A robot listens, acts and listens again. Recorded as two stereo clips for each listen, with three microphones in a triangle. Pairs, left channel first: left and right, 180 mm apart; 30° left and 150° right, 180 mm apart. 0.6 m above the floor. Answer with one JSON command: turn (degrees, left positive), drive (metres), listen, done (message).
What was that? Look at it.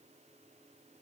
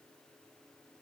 {"listen": true}
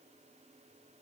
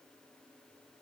{"listen": true}
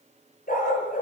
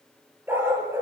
{"turn": 135}
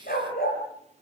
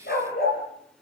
{"turn": 60}
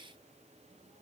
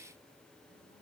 {"listen": true}
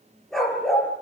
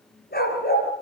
{"done": "Facing the dog barking, over 4 m away."}